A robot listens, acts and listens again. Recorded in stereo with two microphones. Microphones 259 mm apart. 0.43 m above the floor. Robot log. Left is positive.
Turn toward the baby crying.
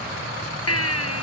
note: The baby crying: about 70° left or 110° left.
cmd yaw +70
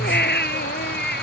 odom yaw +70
note: So it is at 40° left.
cmd yaw +40
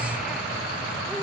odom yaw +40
cmd idle
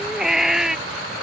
end: Found it: a baby crying, straight ahead.